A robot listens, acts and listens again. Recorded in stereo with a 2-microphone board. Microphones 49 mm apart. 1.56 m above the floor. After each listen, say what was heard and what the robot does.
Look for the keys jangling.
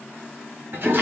Keep listening.
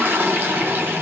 Keep listening.
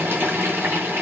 I can't make out keys jangling, only a toilet flushing.